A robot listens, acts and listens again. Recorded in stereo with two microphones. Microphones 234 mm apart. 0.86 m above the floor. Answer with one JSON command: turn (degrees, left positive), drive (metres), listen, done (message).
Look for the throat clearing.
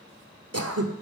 {"turn": -90}
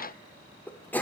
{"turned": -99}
{"done": "Facing the throat clearing."}